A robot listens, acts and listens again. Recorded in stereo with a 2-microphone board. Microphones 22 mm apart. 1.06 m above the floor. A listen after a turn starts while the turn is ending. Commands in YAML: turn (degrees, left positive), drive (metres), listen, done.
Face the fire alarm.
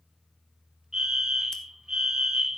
turn: -30
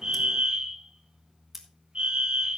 turn: -115
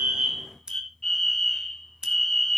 turn: 20
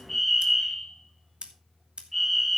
done: "Found it: a fire alarm, straight ahead."